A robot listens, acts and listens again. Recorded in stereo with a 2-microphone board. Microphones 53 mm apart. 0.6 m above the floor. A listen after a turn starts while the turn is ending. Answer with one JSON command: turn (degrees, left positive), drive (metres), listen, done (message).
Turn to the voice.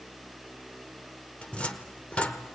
{"listen": true}
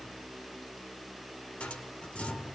{"listen": true}
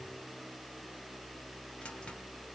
{"done": "I can't make out anyone speaking to turn to."}